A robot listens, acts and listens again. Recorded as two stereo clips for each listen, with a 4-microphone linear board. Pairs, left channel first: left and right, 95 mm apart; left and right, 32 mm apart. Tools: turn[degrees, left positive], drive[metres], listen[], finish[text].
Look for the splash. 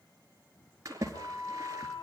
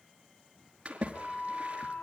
Thought: The splash: about 35° right or 145° right.
Action: turn[-35]
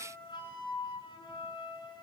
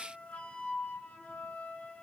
Action: listen[]
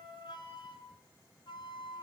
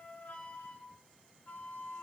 Action: finish[I heard a splash, but can't make it out now. It was about straight ahead or 110° right.]